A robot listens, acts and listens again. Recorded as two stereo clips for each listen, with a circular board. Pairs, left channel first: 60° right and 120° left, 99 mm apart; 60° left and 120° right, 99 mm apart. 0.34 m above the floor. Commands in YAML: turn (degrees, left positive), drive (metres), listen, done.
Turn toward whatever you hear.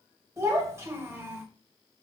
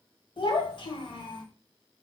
turn: 60
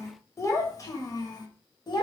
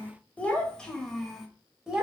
turn: -40
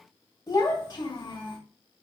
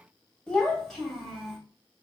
turn: -30
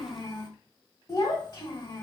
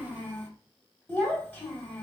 turn: -10
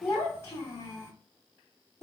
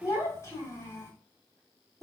done: "Facing the child speaking."